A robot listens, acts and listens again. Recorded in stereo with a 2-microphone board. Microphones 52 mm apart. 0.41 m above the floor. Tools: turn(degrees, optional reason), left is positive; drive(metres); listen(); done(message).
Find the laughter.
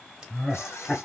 turn(degrees=30)
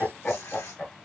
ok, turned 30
turn(degrees=150, reason="So it is at 150° left.")
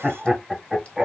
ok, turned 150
done("Found it: laughter, straight ahead.")